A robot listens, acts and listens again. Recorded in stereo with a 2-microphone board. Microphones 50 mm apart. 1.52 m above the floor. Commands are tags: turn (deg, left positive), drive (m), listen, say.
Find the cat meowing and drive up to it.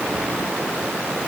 <listen/>
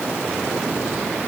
<listen/>
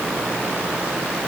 <say>I can't make out a cat meowing to turn to.</say>